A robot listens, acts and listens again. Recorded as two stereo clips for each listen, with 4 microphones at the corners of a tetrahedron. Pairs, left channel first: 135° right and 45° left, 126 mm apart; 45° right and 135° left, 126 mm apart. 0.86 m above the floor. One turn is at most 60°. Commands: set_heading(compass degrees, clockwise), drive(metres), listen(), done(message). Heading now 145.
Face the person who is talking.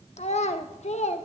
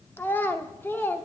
set_heading(205)
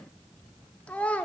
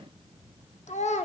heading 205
set_heading(260)
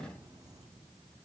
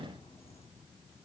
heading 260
listen()
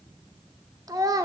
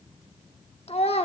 set_heading(275)
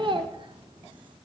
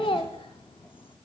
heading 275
done("Found it: a child speaking, straight ahead.")